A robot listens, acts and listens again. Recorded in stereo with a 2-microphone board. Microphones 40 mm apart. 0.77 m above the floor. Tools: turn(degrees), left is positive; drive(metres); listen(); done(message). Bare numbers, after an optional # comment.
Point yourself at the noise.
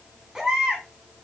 turn(-30)
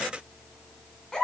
# So it is at 15° left.
turn(15)
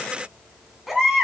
done("Facing the baby crying, 2 to 4 m away.")